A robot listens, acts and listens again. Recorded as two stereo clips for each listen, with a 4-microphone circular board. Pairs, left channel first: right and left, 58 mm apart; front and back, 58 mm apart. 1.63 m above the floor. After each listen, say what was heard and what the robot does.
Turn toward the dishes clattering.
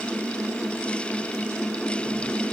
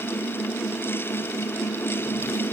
Keep listening.
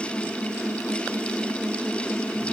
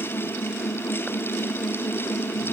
Keep listening.
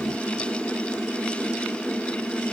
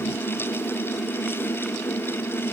I can't make out dishes clattering to turn to.